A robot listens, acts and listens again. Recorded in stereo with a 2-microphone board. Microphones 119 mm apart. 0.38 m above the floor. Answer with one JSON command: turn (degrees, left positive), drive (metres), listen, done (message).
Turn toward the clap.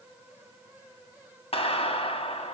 {"turn": 55}
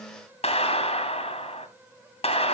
{"turn": 65}
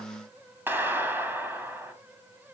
{"turn": -20}
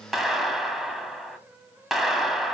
{"done": "Found it: a clap, straight ahead."}